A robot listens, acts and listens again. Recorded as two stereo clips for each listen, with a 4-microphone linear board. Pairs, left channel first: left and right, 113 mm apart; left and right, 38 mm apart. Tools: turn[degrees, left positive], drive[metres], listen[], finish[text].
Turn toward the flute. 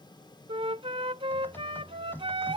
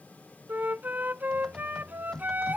Thought: The flute: about 60° right or 120° right.
Action: turn[-60]
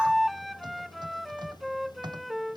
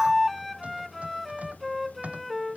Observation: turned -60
Action: finish[Found it: a flute, straight ahead.]